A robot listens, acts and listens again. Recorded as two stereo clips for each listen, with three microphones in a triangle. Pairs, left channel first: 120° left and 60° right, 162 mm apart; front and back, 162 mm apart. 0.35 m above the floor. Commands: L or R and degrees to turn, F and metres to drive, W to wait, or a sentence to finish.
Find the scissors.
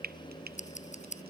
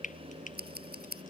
L160
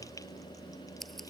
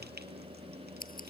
W
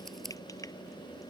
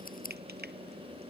W
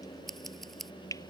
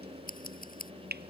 L30
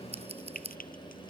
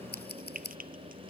R10
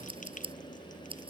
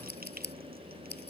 Found it: scissors, straight ahead.